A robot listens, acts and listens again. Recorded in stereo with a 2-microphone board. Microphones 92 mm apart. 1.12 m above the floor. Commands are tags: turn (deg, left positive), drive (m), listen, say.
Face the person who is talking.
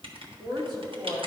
<turn deg="-60"/>
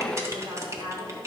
<turn deg="-40"/>
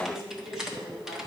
<say>Found it: a woman speaking, straight ahead, 2 to 4 m away.</say>